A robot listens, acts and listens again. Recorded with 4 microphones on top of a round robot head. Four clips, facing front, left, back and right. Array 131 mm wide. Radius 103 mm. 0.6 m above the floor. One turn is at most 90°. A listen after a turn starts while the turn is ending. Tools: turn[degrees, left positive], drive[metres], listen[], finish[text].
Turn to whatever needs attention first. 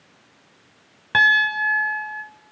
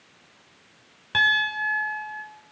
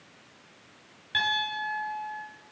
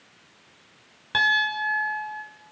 Action: listen[]
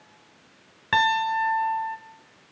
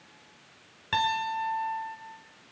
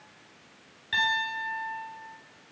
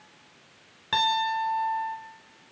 Action: listen[]
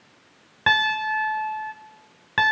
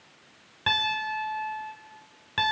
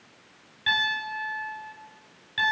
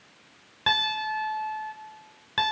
Action: finish[I can't make out anything urgent, only a piano.]